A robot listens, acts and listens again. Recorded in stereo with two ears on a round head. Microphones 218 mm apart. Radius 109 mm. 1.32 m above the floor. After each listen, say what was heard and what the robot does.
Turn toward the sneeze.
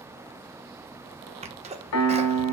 The sneeze: about 25° right or 155° right. Turn 25° right.
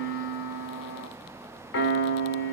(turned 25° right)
Keep listening.
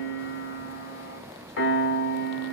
I heard a sneeze, but can't make it out now. It was about straight ahead or 130° right.